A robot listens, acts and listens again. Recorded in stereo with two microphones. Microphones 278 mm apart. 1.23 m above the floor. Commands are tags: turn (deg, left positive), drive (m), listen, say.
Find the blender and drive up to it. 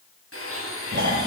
<turn deg="50"/>
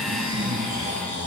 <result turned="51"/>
<listen/>
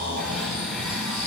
<listen/>
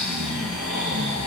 <say>I heard a blender, but can't make it out now. It was about straight ahead or 75° left. I did not reach it.</say>